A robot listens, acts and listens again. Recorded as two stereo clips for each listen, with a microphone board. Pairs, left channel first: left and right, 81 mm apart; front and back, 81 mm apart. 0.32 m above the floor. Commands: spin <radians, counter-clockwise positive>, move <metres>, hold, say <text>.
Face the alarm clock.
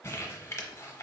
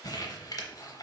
hold
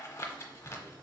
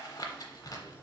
hold
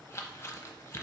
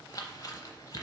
say I can't make out an alarm clock, only crumpling.